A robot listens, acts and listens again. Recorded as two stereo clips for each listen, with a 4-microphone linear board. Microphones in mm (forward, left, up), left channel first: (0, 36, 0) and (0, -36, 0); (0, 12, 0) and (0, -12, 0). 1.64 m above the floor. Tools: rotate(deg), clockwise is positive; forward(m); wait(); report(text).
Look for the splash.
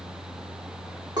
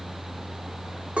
wait()
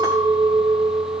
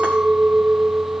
wait()
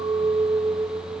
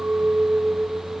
report("I can't make out a splash to turn to.")